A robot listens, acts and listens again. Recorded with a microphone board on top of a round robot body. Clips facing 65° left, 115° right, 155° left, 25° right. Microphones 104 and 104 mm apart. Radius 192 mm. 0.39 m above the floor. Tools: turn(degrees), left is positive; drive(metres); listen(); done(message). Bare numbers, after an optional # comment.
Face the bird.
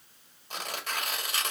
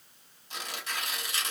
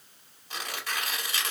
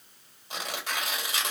listen()
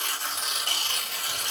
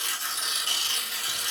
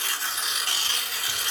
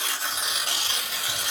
listen()
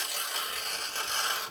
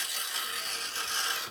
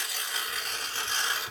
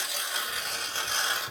done("I can't make out a bird, only tearing paper.")